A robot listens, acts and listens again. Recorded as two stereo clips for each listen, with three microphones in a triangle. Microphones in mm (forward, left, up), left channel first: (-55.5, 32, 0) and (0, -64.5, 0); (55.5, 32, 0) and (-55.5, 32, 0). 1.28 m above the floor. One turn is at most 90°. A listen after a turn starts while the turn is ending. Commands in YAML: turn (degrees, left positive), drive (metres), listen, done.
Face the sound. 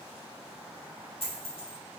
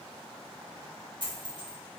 turn: 90
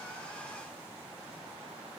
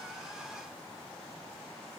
turn: 45
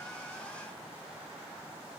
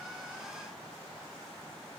done: "Facing where the dropped coin came from. I can't hear it now."